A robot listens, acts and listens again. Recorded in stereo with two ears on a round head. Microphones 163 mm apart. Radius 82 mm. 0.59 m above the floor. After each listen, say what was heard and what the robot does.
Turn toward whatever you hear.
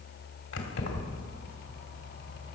Turn 90° left.
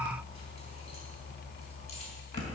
So it is at 40° left. Turn 40° left.
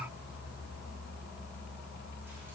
Keep listening.
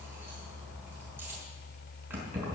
The keys jangling is now 10° right. Turn 10° right.
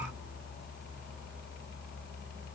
Keep listening.
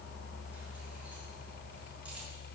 Keep listening.
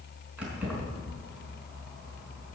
Facing the keys jangling, over 4 m away.